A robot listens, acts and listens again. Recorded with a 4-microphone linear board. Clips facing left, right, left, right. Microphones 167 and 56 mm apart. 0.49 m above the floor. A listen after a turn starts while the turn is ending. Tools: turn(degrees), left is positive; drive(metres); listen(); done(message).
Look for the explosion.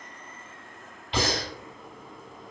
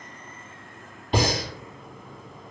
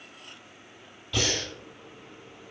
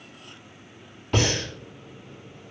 listen()
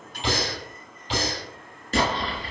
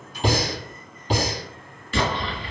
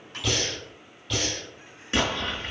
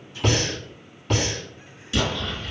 turn(degrees=45)
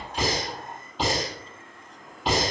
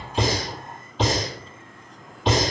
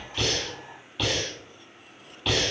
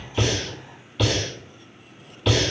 listen()
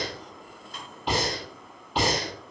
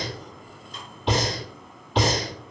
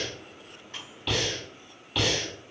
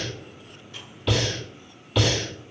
done("I heard an explosion, but can't make it out now. It was about straight ahead or 90° left.")